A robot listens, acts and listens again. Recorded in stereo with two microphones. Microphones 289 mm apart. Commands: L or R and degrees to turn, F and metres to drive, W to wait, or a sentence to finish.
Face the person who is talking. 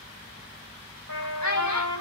L70
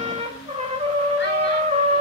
W
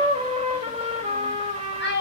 L40
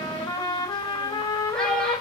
W
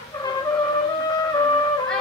W
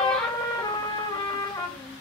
Facing where the child speaking came from. I can't hear it now.